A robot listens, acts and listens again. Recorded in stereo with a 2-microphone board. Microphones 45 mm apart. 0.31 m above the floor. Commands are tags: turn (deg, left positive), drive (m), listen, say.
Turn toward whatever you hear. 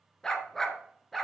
<turn deg="30"/>
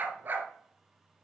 <turn deg="-40"/>
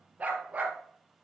<turn deg="-30"/>
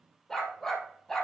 <turn deg="10"/>
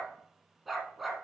<say>Facing the dog barking.</say>